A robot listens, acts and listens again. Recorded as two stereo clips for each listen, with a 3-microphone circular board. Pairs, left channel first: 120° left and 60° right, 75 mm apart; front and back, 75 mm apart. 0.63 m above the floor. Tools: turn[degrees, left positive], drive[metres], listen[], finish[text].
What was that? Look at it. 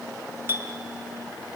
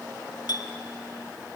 Action: finish[Found it: a clink, straight ahead.]